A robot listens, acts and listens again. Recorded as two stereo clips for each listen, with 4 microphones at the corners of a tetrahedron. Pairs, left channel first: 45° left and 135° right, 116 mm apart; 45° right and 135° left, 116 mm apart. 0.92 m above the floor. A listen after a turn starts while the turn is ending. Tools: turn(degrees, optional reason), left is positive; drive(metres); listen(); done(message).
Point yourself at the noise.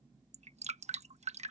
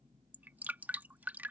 turn(degrees=-150, reason="The dripping: 150° right.")
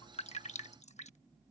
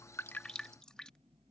turn(degrees=40, reason="The dripping is now 40° left.")
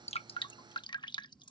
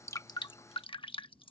done("Found it: dripping, straight ahead.")